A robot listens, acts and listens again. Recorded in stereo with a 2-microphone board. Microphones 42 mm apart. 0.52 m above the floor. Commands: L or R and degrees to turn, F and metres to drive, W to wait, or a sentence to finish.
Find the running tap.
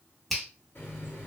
L65
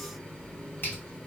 L25
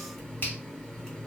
L15
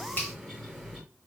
Facing the running tap.